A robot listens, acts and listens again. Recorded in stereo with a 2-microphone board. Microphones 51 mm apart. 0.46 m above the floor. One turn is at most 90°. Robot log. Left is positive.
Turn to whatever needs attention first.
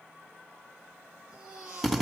cmd yaw -30
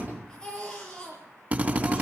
note: So it is at 15° left.
cmd yaw +15
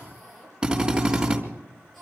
end: Found it: a baby crying, straight ahead.